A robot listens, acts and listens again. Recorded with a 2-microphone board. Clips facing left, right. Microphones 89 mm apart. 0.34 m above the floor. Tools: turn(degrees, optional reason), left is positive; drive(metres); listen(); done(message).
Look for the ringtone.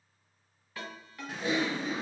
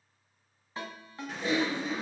turn(degrees=-25, reason="The ringtone: about 25° right or 155° right.")
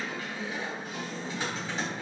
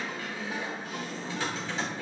listen()
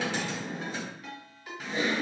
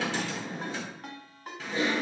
turn(degrees=-125, reason="So it is at 125° right.")
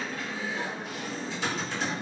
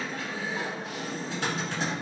listen()
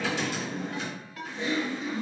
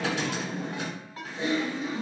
turn(degrees=-35, reason="The ringtone is now 35° right.")
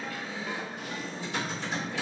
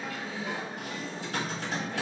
listen()
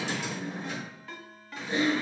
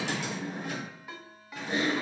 turn(degrees=-15, reason="The ringtone is now 15° right.")
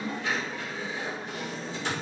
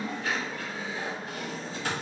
listen()
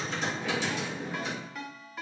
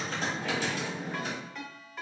done("Found it: a ringtone, straight ahead.")